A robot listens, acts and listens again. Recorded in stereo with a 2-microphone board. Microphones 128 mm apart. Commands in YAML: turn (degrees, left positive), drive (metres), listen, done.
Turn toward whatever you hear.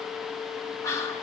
turn: 25
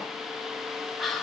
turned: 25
done: "Facing the whispering."